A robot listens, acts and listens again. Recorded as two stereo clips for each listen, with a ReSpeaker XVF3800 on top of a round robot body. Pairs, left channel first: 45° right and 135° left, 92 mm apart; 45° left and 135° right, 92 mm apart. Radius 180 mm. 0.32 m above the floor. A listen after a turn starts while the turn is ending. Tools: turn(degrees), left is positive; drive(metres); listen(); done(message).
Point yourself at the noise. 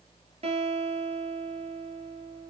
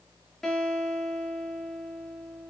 turn(degrees=130)
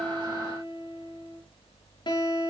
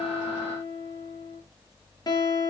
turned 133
done("Facing the guitar, over 4 m away.")